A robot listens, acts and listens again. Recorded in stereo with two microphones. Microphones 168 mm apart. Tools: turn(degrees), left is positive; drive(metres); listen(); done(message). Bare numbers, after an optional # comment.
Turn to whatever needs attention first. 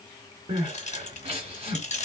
# The crying: about 35° right or 145° right.
turn(-35)
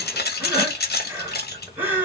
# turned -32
# So it is at 10° right.
turn(-10)
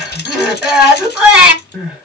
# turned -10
done("Found it: crying, straight ahead, 1 to 2 m away.")